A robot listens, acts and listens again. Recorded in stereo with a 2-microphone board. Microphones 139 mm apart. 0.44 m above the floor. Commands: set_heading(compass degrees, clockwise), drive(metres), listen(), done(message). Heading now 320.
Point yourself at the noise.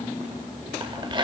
set_heading(355)
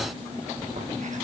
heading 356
listen()
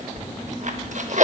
set_heading(101)
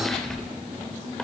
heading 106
listen()
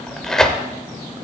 done("Found it: tearing paper, straight ahead.")